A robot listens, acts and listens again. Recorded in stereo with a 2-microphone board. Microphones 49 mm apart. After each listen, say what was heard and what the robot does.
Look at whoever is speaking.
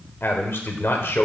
The man speaking: about 55° left or 125° left. Turn 55° left.
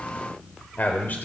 So it is at 50° left. Turn 50° left.
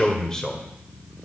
The man speaking is now 15° left. Turn 15° left.
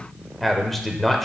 Facing the man speaking, 1 to 2 m away.